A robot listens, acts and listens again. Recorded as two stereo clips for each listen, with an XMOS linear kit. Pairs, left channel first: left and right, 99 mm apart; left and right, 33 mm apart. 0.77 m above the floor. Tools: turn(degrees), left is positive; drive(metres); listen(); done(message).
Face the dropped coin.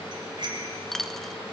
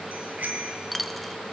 turn(degrees=30)
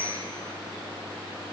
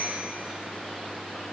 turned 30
listen()
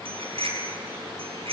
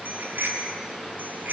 done("I heard a dropped coin, but can't make it out now. It was about 25° right or 145° left.")